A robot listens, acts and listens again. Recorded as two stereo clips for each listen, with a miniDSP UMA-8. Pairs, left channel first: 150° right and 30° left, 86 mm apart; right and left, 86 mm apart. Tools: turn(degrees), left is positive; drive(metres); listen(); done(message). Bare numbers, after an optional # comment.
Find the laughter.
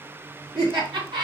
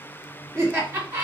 # The laughter: 30° left.
turn(30)
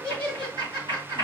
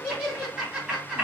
# The laughter is now 10° left.
turn(10)
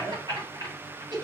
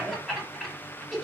done("Facing the laughter.")